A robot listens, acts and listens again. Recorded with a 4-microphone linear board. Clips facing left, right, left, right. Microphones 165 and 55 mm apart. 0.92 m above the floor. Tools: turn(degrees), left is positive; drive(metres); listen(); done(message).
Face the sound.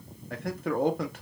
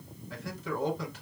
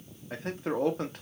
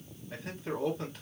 turn(degrees=60)
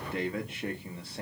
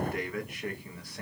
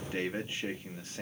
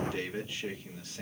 turn(degrees=30)
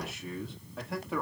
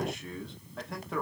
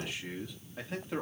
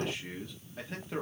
done("Found it: a man speaking, straight ahead, 1 to 2 m away.")